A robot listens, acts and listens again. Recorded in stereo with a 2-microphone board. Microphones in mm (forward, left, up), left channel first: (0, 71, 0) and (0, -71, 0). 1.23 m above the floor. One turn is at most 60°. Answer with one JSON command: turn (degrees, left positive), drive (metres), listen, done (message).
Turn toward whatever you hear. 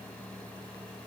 {"listen": true}
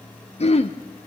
{"turn": 45}
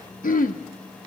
{"turn": 60}
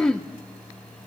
{"done": "Found it: throat clearing, straight ahead, under 1 m away."}